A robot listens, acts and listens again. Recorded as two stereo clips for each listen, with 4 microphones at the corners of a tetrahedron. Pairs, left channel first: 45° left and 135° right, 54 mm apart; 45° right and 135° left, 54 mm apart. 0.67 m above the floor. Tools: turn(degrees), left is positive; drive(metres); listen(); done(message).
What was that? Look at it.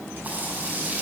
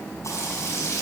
turn(degrees=-75)
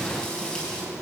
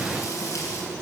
turn(degrees=-30)
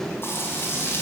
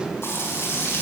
done("Facing the frying.")